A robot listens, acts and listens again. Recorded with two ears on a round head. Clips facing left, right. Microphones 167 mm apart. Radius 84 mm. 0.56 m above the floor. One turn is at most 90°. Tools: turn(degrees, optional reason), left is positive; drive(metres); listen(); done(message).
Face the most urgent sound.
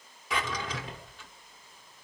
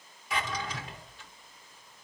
listen()
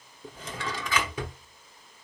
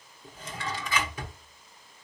listen()
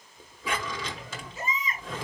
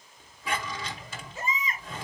turn(degrees=-45, reason="The baby crying: about 45° right or 135° right.")
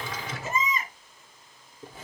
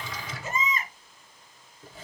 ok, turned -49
done("Facing the baby crying.")